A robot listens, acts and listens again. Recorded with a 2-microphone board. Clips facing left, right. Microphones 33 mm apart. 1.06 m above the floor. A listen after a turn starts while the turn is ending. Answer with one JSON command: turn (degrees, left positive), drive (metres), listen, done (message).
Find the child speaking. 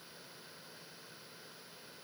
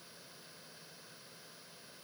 {"listen": true}
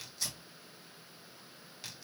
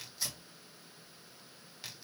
{"listen": true}
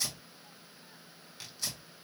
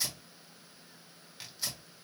{"done": "I can't make out a child speaking, only tearing paper."}